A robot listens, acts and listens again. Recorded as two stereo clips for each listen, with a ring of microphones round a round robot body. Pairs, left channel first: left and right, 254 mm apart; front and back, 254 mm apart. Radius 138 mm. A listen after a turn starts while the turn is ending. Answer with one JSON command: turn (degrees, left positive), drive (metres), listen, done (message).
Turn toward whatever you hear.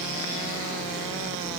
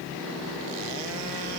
{"listen": true}
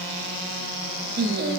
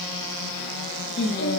{"turn": -45}
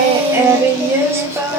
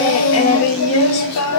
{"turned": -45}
{"turn": -10}
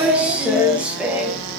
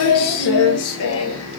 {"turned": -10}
{"done": "Facing the singing."}